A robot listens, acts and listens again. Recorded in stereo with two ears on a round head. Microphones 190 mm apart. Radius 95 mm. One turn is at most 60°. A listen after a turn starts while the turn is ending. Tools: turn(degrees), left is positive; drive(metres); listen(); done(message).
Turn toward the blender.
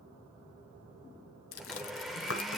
turn(degrees=30)
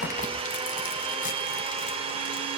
turn(degrees=-30)
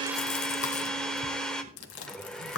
done("Facing the blender.")